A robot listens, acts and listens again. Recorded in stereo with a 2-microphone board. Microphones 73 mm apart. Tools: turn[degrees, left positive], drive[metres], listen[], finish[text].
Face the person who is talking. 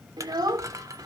Thought: The child speaking: about 70° right or 110° right.
Action: turn[-70]
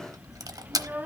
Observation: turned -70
Thought: So it is at 25° right.
Action: turn[-25]
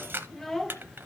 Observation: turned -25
Action: finish[Found it: a child speaking, straight ahead.]